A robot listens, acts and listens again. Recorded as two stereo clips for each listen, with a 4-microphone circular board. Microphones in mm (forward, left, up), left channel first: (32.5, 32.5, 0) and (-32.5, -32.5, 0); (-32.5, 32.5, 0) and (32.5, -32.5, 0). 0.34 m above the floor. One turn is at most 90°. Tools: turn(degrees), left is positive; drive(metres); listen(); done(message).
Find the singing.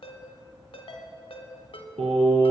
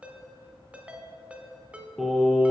turn(degrees=-90)
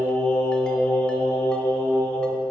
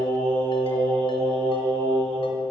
turn(degrees=-20)
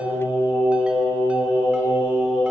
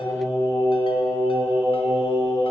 turn(degrees=10)
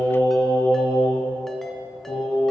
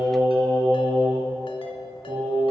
done("Found it: singing, straight ahead.")